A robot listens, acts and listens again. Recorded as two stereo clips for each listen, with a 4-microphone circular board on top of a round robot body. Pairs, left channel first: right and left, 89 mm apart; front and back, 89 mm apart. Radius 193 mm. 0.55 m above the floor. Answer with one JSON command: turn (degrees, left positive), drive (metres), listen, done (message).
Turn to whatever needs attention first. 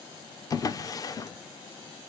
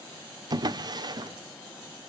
{"listen": true}
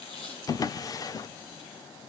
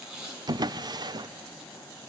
{"listen": true}
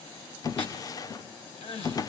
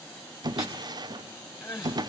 {"turn": -65}
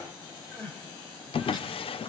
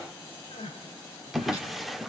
{"turn": -20}
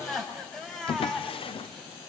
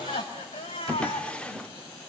{"done": "Facing the crying."}